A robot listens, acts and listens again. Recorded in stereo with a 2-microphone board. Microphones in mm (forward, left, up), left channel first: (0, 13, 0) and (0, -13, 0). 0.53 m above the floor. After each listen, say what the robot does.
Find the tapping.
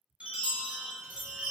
Keep listening.
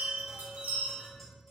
Turn 30° left.
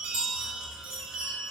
Keep listening.
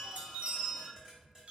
Turn 25° right.
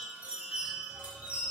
Keep listening.
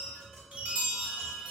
Facing the tapping, 1 to 2 m away.